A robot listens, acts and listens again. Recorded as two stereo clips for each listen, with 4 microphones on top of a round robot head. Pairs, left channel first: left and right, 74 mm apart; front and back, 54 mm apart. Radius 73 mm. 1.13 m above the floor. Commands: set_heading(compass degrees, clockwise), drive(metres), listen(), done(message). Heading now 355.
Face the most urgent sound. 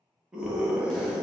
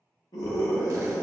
set_heading(10)
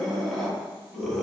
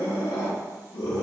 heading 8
done("Facing the scream.")